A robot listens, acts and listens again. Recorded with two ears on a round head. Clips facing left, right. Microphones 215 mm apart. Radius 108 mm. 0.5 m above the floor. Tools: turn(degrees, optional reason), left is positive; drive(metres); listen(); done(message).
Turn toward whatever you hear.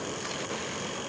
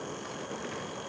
listen()
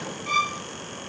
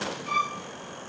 turn(degrees=65, reason="The violin: about 65° left or 115° left.")
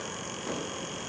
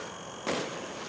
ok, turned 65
listen()
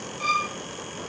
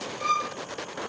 turn(degrees=50, reason="So it is at 50° left.")
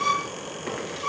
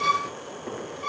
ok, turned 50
turn(degrees=20, reason="The violin is now 20° left.")
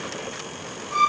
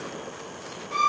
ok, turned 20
done("Facing the violin.")